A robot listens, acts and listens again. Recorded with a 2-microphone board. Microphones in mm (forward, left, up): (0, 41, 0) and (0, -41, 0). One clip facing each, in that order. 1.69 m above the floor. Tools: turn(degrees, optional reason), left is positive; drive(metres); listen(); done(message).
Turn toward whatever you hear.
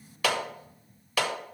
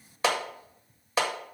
turn(degrees=-25, reason="The clap: about 25° right or 155° right.")
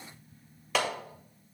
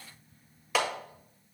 done("Facing the clap.")